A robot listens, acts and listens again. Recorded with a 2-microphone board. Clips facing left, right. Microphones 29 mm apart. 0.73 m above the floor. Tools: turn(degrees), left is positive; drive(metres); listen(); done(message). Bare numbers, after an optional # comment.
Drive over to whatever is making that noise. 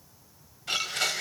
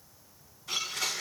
# The blender: about 75° left or 105° left.
turn(75)
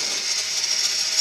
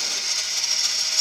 drive(1.0)
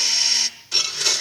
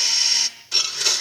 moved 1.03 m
drive(1.0)
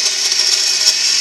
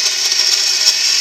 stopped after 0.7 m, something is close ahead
done("Arrived at the blender, straight ahead.")